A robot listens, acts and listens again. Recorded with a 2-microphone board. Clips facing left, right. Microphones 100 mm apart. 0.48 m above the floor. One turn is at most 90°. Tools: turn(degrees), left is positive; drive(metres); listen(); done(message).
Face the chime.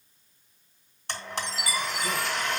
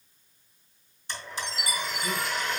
turn(degrees=-60)
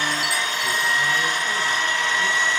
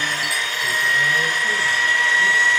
listen()
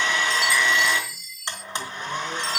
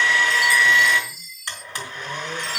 done("Found it: a chime, straight ahead.")